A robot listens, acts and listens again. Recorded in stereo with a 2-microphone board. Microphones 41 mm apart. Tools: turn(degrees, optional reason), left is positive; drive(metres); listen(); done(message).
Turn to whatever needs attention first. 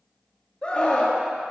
turn(degrees=25, reason="The scream: about 25° left or 155° left.")
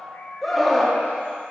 done("Found it: a scream, straight ahead, 1 to 2 m away.")